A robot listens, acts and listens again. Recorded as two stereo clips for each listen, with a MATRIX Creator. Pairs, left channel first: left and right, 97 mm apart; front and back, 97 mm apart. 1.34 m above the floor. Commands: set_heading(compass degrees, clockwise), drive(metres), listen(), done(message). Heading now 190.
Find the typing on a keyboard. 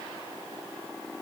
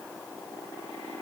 listen()
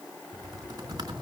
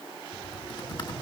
set_heading(235)
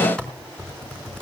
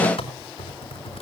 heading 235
set_heading(225)
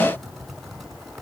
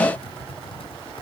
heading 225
done("Found it: typing on a keyboard, straight ahead, 2 to 4 m away.")